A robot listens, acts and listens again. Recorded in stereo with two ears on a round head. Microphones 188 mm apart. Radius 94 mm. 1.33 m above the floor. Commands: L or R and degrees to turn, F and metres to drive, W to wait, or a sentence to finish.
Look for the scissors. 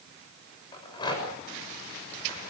W
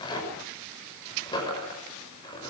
W
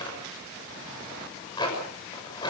I can't make out scissors, only a rattle.